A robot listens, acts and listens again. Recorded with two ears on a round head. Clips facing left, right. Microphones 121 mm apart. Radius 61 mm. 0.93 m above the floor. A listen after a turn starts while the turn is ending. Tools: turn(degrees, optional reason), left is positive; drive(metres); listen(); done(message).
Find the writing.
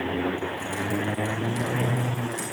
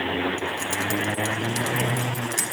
listen()
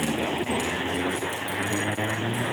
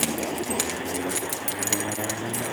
listen()
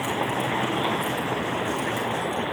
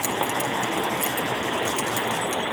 done("I can't make out writing to turn to.")